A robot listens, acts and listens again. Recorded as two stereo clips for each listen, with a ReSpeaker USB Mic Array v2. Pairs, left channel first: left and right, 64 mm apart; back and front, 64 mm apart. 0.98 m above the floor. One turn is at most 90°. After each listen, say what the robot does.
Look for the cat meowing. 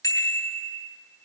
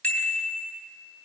Keep listening.
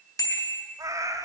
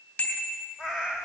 Turn 80° right.
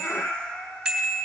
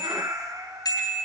Turn 15° left.
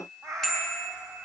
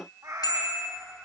Turn 10° left.
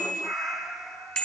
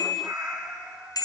Found it: a cat meowing, straight ahead.